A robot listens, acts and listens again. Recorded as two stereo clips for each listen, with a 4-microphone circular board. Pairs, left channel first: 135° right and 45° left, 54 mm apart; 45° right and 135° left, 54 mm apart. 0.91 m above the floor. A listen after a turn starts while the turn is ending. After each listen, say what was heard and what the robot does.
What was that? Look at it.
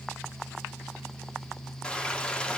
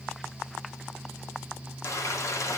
The frying: 65° right. Turn 65° right.
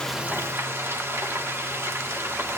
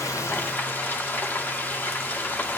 Found it: frying, straight ahead, 1 to 2 m away.